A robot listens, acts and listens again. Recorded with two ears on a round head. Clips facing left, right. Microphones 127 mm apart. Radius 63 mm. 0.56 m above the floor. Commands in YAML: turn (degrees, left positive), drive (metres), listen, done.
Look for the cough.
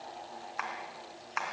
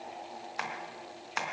listen: true
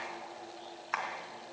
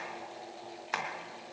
listen: true
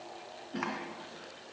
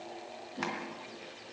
turn: 90
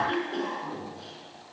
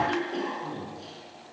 done: "Found it: a cough, straight ahead, over 4 m away."